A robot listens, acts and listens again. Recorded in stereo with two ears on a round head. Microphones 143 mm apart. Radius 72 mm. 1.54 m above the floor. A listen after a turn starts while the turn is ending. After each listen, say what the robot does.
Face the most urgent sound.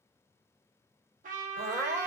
Turn 20° right.
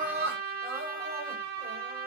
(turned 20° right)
Turn 140° right.
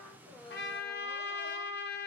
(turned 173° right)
Turn 35° left.
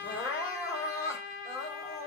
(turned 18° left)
Turn 20° left.
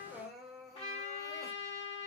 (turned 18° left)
Found it: crying, straight ahead.